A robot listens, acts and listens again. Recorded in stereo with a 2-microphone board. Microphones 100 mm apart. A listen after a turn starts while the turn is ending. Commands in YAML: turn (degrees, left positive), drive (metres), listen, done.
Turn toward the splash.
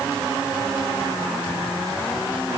listen: true
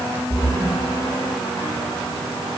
turn: -90
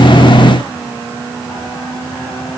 done: "Facing where the splash came from. I can't hear it now."